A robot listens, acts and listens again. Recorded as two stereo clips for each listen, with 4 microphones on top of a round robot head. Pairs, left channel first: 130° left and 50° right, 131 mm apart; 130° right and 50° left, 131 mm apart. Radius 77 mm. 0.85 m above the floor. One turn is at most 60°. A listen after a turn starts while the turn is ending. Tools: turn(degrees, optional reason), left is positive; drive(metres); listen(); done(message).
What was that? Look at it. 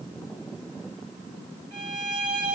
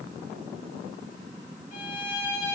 turn(degrees=-60, reason="The violin: 95° right.")
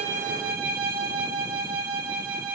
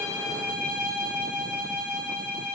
turn(degrees=-45, reason="The violin is now 45° right.")
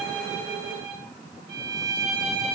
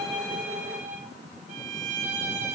turn(degrees=15, reason="The violin is now 15° left.")
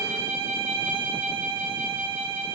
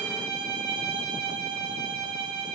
done("Facing the violin, 2 to 4 m away.")